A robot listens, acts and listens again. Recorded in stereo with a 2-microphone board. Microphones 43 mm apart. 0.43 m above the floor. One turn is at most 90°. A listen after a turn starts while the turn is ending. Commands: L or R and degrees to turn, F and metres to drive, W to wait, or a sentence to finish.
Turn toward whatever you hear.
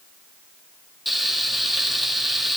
L30
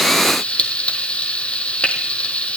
L90
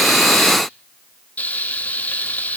L35
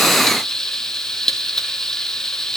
L10
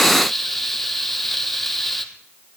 Facing the frying.